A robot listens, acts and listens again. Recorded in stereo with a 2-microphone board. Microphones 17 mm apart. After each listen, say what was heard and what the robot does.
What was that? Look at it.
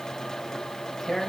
The tearing paper: about 35° left or 145° left. Turn 35° left.
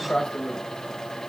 So it is at 100° left. Turn 100° left.
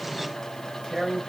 Found it: tearing paper, straight ahead.